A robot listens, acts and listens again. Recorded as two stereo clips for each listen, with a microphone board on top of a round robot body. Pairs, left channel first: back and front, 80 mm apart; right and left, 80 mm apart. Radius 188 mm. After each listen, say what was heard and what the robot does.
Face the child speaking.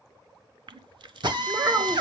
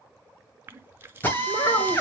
The child speaking: 50° right. Turn 50° right.
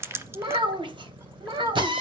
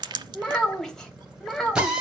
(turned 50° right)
Found it: a child speaking, straight ahead, 2 to 4 m away.